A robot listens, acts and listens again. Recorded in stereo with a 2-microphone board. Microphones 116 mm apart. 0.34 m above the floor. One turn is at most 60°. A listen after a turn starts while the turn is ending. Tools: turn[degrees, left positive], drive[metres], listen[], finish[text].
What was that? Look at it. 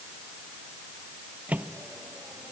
Action: turn[-30]
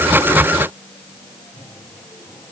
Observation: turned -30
Thought: So it is at 20° left.
Action: turn[20]
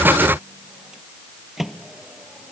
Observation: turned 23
Action: finish[Facing the microwave.]